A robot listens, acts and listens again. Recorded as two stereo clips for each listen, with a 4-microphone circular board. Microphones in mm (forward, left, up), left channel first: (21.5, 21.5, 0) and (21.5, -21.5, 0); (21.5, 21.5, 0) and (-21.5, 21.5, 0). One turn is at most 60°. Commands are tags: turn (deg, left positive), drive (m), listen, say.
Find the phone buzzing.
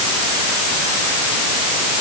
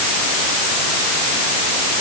<listen/>
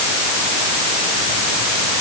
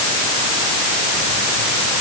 <listen/>
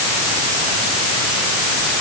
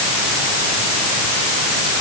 <say>I can't make out a phone buzzing to turn to.</say>